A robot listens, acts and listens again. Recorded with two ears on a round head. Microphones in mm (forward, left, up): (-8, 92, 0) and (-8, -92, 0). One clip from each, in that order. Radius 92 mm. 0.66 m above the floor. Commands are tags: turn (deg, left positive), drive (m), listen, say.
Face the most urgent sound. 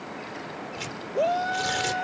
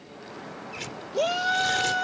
<turn deg="-70"/>
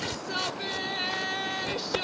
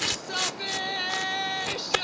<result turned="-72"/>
<turn deg="-20"/>
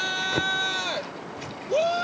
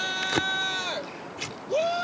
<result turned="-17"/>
<say>Facing the shout.</say>